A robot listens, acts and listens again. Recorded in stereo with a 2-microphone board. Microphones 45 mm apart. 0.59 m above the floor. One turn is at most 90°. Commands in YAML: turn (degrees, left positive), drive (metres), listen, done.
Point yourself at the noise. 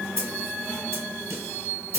turn: -70
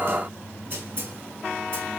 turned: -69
listen: true
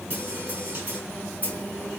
turn: -40
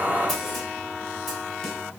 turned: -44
listen: true
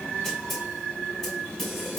done: "Facing the snare drum."